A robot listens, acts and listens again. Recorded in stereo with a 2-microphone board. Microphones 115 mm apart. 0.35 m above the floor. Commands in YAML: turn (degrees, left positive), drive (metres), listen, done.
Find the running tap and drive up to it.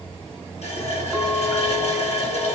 turn: 60
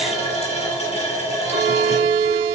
turn: 60
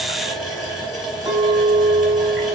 drive: 1.0
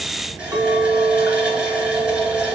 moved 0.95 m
turn: -10
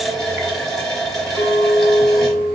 drive: 1.0
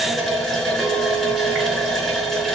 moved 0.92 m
drive: 1.0
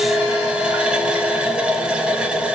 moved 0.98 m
turn: -10
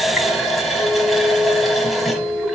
drive: 1.0
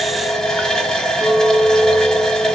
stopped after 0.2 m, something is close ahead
done: "I am next to the running tap."